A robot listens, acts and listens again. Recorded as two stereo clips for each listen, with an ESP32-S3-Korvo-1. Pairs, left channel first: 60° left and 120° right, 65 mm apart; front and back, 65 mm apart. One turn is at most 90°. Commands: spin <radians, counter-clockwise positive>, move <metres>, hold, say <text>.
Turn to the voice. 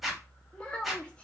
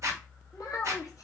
spin -0.17
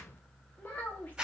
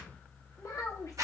say Found it: a child speaking, straight ahead, under 1 m away.